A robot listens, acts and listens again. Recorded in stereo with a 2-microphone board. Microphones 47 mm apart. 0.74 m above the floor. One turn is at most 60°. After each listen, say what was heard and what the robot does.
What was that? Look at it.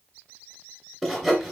Turn 30° left.
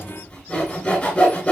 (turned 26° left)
So it is at 150° left. Turn 60° left.
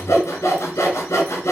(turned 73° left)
The sawing is now 80° left. Turn 60° left.
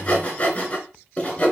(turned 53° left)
The sawing is now 25° left. Turn 25° left.
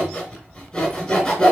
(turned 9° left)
The sawing is now 15° left. Turn 15° left.
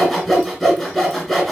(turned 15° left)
Facing the sawing, 2 to 4 m away.